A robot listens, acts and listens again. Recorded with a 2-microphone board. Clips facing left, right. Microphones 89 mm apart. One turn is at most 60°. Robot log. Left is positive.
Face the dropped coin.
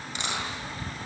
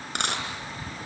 note: The dropped coin: about 65° right or 115° right.
cmd yaw -60
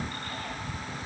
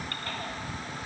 cmd idle
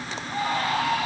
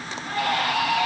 end: I heard a dropped coin, but can't make it out now. It was about 5° right or 55° right.